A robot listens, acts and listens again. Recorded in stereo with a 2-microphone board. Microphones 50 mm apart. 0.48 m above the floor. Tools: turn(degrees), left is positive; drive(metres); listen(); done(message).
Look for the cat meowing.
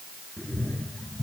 turn(degrees=20)
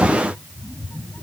turn(degrees=40)
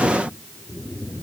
turn(degrees=110)
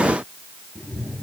done("Found it: a cat meowing, straight ahead.")